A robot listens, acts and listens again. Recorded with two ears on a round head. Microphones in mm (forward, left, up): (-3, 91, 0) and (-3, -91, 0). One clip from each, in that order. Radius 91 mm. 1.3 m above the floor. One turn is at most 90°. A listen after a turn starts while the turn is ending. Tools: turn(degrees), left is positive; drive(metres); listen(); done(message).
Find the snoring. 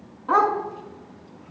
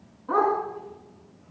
listen()
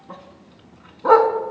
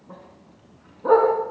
listen()
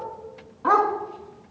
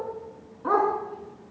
done("I can't make out snoring to turn to.")